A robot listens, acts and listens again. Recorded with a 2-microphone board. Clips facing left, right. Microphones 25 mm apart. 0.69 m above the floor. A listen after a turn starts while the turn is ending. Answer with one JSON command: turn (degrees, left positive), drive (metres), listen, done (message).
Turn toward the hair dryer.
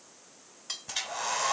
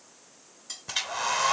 {"turn": -30}
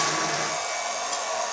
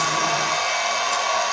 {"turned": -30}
{"turn": -130}
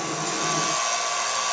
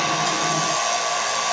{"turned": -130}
{"turn": -25}
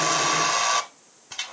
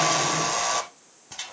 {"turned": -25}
{"turn": 15}
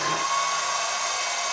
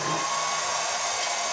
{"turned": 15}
{"done": "Facing the hair dryer, 1 to 2 m away."}